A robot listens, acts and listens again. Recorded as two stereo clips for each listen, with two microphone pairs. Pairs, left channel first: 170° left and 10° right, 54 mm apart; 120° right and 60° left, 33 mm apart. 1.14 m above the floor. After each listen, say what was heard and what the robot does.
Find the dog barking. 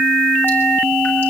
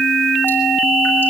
Keep listening.
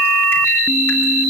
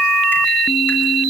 Keep listening.
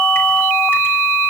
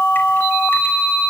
I can't make out a dog barking.